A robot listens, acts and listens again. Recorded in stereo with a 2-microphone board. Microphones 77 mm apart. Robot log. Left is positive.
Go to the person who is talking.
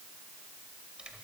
cmd idle
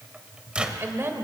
note: The woman speaking: about 35° right or 145° right.
cmd yaw -35
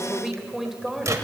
cmd fwd 1.0
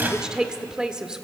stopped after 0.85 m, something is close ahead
note: The woman speaking is now 15° right.
cmd yaw -15
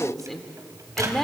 end: Arrived at the woman speaking, straight ahead.